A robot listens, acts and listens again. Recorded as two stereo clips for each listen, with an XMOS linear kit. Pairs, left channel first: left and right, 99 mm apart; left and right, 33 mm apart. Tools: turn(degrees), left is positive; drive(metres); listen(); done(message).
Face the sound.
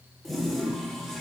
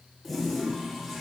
turn(degrees=30)
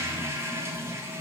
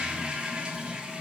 turn(degrees=-25)
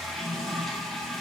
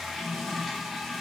done("Found it: a toilet flushing, straight ahead, 2 to 4 m away.")